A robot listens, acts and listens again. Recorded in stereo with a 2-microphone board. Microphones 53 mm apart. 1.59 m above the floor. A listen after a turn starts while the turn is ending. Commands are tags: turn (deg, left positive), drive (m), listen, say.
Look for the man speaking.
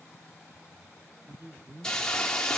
<turn deg="-45"/>
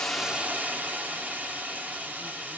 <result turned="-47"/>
<listen/>
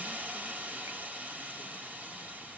<listen/>
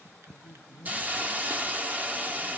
<turn deg="65"/>
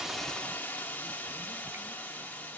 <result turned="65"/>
<listen/>
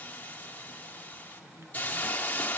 <listen/>
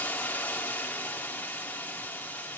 <say>I heard a man speaking from this way, but can't make it out now.</say>